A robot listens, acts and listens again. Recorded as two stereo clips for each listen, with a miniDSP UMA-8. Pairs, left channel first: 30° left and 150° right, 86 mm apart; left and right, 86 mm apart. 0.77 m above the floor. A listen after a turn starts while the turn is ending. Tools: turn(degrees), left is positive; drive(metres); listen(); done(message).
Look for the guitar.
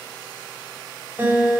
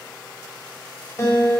turn(degrees=145)
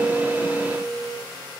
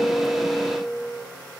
turn(degrees=40)
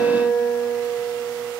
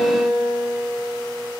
done("Found it: a guitar, straight ahead.")